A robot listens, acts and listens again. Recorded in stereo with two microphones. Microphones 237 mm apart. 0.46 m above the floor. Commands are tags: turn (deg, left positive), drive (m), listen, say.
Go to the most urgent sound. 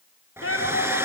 <turn deg="70"/>
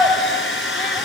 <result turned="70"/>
<turn deg="15"/>
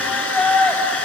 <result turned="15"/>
<drive m="1.0"/>
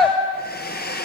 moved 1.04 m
<drive m="1.0"/>
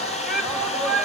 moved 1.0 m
<drive m="1.0"/>
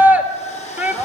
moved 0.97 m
<turn deg="-10"/>
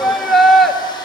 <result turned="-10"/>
<drive m="1.0"/>
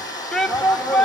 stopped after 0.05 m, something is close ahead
<say>Arrived at the shout, straight ahead.</say>